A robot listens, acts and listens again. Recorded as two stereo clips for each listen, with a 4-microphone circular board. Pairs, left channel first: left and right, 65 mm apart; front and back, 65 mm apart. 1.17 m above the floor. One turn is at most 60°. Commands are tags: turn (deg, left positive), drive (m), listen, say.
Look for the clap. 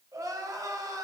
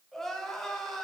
<listen/>
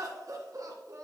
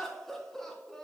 <listen/>
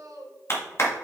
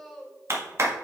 <turn deg="60"/>
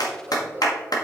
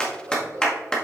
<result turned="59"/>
<turn deg="60"/>
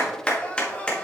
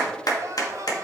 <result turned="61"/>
<turn deg="15"/>
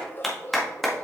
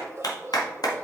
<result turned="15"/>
<say>Found it: a clap, straight ahead.</say>